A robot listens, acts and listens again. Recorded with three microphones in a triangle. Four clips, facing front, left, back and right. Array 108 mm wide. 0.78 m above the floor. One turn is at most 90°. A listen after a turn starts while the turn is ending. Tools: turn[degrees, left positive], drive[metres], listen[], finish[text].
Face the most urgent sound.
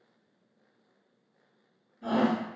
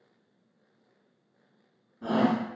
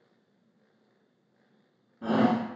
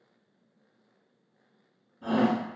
Thought: The shout: 165° left.
Action: turn[90]
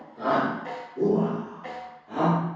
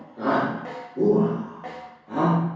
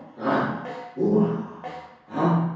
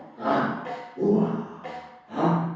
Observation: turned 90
Thought: The shout is now 90° left.
Action: turn[90]
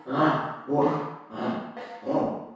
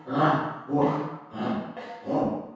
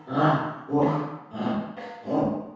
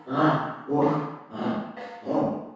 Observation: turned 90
Thought: The shout is now 25° right.
Action: turn[-25]
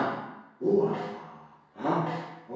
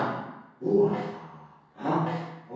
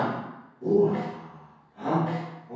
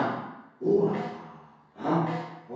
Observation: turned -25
Action: finish[Facing the shout.]